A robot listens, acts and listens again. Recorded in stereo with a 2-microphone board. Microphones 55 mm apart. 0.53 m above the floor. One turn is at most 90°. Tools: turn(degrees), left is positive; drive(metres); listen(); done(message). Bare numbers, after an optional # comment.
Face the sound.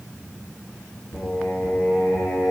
# The singing: about 45° left or 135° left.
turn(45)
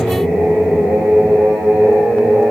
# So it is at 20° right.
turn(-20)
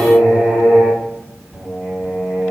done("Found it: singing, straight ahead, over 4 m away.")